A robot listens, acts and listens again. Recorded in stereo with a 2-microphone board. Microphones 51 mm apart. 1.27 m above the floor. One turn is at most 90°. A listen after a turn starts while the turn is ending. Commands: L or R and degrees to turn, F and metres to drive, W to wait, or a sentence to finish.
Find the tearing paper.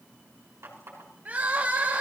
W
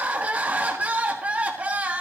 W
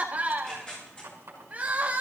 L20
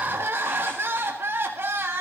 W
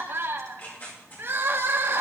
L90
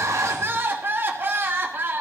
L50
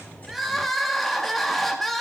W
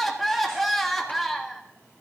Facing where the tearing paper came from. I can't hear it now.